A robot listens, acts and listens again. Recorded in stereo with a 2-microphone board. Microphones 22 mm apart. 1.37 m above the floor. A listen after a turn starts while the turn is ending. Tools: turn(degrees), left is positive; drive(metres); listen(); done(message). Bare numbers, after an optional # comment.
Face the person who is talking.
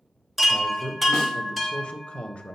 # The man speaking: about 55° left or 125° left.
turn(55)
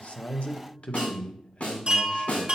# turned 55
# So it is at 65° left.
turn(65)
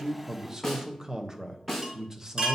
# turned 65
# The man speaking is now 30° right.
turn(-30)
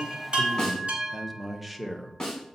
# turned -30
done("Facing the man speaking.")